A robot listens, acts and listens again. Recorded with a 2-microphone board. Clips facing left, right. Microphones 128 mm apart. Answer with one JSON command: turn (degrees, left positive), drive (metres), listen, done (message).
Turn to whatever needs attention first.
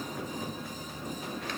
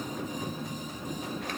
{"listen": true}
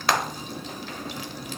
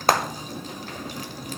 {"listen": true}
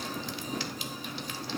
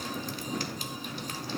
{"done": "I can't make out anything urgent, only frying."}